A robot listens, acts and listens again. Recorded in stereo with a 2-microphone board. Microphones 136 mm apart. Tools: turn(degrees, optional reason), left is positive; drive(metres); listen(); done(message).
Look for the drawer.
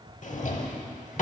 turn(degrees=65, reason="The drawer: about 65° left or 115° left.")
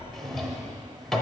done("Found it: a drawer, straight ahead, under 1 m away.")